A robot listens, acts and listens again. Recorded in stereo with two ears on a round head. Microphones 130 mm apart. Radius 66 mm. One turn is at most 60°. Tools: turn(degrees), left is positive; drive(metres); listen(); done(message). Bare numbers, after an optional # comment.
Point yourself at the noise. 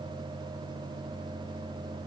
listen()
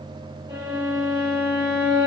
# The violin: about 35° right or 145° right.
turn(-35)
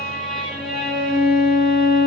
done("Found it: a violin, straight ahead, 1 to 2 m away.")